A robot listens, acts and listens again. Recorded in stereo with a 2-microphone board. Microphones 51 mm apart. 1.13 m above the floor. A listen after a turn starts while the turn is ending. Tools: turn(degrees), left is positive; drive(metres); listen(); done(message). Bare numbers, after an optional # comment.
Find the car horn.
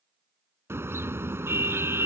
# The car horn: about 55° right or 125° right.
turn(-55)
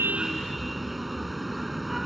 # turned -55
done("Facing the car horn.")